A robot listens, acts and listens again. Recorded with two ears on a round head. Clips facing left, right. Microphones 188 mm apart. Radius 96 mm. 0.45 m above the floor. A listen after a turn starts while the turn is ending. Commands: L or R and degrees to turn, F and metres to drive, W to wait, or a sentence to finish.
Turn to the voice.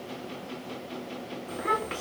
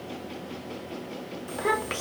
R60
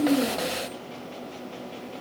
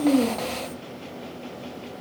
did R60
W
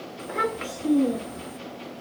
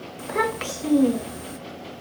R55
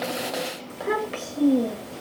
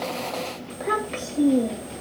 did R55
Found it: a child speaking, straight ahead, under 1 m away.